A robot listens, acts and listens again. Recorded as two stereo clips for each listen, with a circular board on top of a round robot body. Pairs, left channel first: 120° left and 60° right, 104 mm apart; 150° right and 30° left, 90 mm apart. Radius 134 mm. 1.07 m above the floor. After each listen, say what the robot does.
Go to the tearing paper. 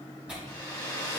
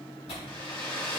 Turn 140° right.
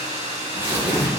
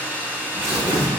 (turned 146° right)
Drive 1.0 m forward.
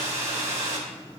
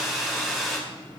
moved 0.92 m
Keep listening.
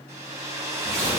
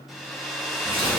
Drive 1.0 m forward.
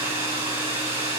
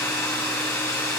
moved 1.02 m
Keep listening.
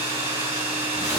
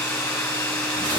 Keep listening.
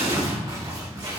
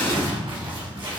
Drive 1.0 m forward.
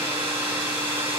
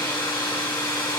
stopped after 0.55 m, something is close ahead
Keep listening.
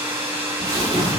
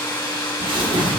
Arrived at the tearing paper, straight ahead.